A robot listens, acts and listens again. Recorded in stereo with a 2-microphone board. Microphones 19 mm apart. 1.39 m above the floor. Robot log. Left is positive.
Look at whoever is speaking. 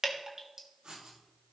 cmd idle
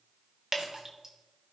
cmd idle
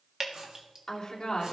note: The woman speaking: about 45° left or 135° left.
cmd yaw +45
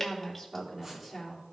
end: Found it: a woman speaking, straight ahead.